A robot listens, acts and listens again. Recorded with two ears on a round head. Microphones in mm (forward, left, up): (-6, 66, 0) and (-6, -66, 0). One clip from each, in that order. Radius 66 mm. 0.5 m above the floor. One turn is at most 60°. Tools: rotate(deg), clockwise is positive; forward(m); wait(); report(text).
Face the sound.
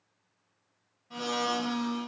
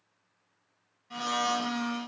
rotate(55)
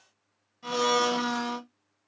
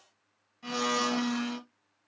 report("Found it: a blender, straight ahead.")